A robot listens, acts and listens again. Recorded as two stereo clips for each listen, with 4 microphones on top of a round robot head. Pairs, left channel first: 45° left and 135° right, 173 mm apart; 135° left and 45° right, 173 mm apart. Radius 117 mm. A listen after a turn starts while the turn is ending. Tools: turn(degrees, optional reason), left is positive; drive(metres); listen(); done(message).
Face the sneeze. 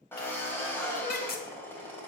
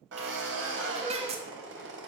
turn(degrees=10, reason="The sneeze: 10° left.")
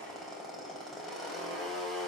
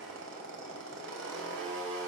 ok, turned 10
done("I heard a sneeze from this way, but can't make it out now.")